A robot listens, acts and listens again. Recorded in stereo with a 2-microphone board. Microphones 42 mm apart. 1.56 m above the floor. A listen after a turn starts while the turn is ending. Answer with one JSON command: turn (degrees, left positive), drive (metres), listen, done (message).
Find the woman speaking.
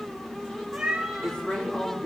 {"turn": 25}
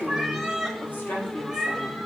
{"turn": 120}
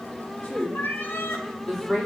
{"turn": 15}
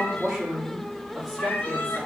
{"done": "Found it: a woman speaking, straight ahead, over 4 m away."}